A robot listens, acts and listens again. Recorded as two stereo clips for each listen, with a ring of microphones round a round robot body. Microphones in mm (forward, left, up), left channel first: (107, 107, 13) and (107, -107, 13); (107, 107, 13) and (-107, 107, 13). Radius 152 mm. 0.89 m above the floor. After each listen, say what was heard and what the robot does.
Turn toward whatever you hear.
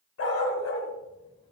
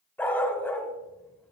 The dog barking: 80° left. Turn 80° left.
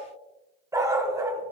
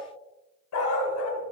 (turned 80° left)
The dog barking is now 15° right. Turn 15° right.
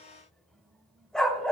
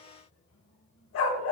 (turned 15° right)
Found it: a dog barking, straight ahead.